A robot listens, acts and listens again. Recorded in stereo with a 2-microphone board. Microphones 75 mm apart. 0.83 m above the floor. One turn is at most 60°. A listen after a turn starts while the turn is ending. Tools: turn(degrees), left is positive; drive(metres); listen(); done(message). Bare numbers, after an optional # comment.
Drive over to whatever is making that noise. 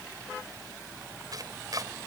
# The chopping: about 60° right or 120° right.
turn(-60)
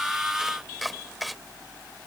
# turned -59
drive(1.0)
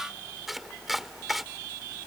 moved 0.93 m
drive(1.0)
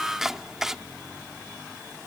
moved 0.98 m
# The chopping is now 10° right.
turn(-10)
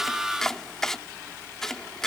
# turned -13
drive(1.0)
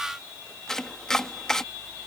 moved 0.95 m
# The chopping is now 10° left.
turn(10)
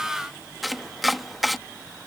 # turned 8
drive(1.0)
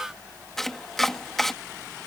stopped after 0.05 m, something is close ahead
done("I am next to the chopping.")